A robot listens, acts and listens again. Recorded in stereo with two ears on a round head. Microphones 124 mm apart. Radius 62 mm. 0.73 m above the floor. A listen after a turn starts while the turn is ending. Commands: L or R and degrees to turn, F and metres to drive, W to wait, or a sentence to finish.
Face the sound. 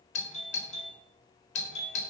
L50
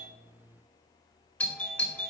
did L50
L15
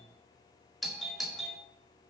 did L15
Found it: a doorbell, straight ahead.